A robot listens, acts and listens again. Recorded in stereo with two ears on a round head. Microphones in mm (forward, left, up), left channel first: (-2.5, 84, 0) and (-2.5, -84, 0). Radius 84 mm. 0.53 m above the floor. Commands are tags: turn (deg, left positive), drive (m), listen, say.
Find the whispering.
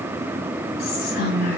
<turn deg="60"/>
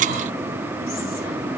<listen/>
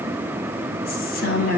<turn deg="55"/>
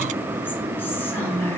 <turn deg="10"/>
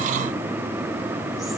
<listen/>
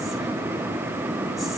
<listen/>
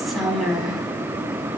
<say>Found it: whispering, straight ahead.</say>